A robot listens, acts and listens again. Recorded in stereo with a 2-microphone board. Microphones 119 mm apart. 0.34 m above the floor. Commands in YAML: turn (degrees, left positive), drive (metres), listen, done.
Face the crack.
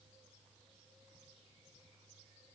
listen: true
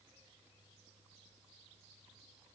listen: true
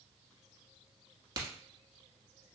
turn: -35
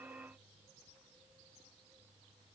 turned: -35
listen: true
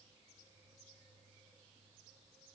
done: "I heard a crack, but can't make it out now. It was about straight ahead or 110° right."